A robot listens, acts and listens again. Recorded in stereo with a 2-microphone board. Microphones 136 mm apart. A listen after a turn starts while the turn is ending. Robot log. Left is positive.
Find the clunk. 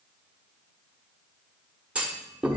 cmd yaw -30
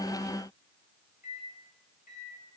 cmd idle
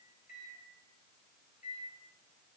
end: I heard a clunk, but can't make it out now. It was about 20° left or 140° right.